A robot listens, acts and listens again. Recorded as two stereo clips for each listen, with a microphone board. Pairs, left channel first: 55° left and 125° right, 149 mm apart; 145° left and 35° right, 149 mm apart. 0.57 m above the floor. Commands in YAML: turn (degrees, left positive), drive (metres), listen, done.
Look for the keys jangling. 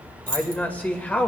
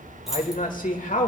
turn: -125
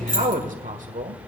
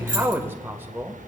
done: "Facing the keys jangling, 2 to 4 m away."